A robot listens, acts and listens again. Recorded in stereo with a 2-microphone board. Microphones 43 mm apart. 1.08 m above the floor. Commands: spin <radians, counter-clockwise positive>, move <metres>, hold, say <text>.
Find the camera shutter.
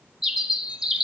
hold
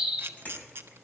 spin -0.96
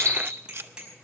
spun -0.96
spin -1.22
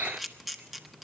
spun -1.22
say Facing the camera shutter, under 1 m away.